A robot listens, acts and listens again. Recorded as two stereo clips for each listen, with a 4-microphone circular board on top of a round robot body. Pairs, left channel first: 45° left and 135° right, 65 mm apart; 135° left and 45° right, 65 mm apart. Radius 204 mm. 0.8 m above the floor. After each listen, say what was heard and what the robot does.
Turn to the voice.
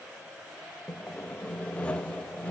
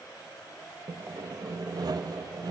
Keep listening.
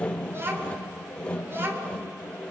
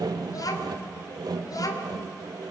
The child speaking: 165° left. Turn 165° left.
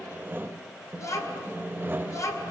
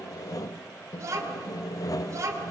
Facing the child speaking.